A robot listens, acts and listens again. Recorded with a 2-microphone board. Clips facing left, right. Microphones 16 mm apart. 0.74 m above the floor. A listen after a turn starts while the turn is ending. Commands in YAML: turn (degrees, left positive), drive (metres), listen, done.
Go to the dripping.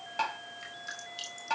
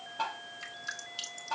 turn: -15
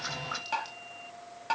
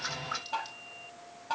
listen: true
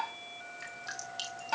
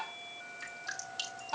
drive: 1.0
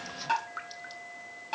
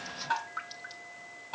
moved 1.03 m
drive: 1.0
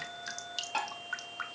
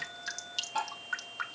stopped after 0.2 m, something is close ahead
turn: -10
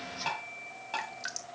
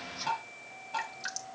done: "Arrived at the dripping, straight ahead."